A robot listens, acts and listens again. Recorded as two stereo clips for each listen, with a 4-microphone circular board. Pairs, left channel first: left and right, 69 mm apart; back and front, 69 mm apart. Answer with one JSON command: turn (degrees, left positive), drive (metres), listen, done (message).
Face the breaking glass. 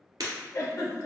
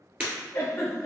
{"turn": -70}
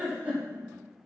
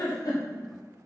{"done": "Facing where the breaking glass came from. I can't hear it now."}